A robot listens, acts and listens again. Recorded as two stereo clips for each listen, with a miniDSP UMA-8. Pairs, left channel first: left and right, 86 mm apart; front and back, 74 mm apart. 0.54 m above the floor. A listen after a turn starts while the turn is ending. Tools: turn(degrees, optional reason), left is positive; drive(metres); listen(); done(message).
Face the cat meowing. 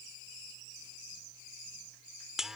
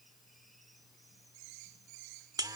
listen()
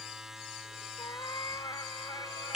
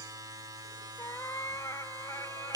turn(degrees=45, reason="The cat meowing: 45° left.")
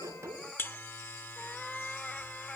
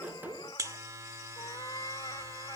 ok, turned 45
turn(degrees=10, reason="The cat meowing is now 10° left.")
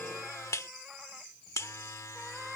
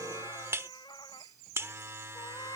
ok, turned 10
done("Found it: a cat meowing, straight ahead.")